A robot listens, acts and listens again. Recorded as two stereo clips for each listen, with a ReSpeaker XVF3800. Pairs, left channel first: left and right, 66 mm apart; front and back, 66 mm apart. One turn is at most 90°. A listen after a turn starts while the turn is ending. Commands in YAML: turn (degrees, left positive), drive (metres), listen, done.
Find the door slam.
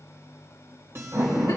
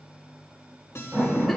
turn: -90
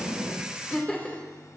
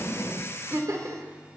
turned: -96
turn: -25
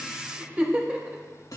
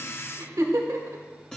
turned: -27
done: "I heard a door slam from this way, but can't make it out now."